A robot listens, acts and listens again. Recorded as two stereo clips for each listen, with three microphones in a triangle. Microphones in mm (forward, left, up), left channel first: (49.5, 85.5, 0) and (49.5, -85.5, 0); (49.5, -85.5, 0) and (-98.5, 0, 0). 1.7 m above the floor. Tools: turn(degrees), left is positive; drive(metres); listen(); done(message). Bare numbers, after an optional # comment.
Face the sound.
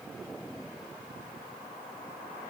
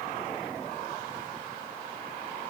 listen()
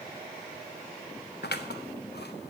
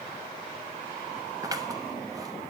# The scissors: 85° left.
turn(85)
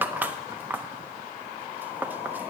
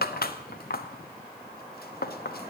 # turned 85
# The scissors is now 10° right.
turn(-10)
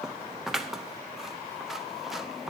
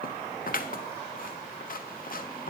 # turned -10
done("Facing the scissors, under 1 m away.")